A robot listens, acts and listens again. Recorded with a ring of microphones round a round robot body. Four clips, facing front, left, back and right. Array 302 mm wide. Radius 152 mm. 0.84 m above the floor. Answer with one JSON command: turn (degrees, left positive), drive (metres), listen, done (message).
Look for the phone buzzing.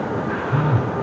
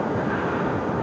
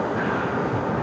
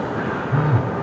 {"turn": -50}
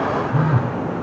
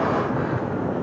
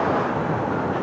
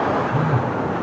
{"turn": -25}
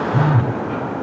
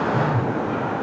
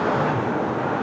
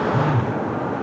{"turn": -10}
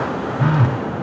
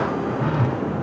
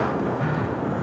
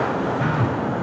{"done": "Facing the phone buzzing."}